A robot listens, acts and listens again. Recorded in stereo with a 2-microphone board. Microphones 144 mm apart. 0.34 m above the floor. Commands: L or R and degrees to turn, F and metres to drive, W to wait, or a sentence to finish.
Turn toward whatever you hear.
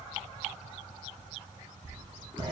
R35
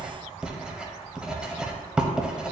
Facing the writing.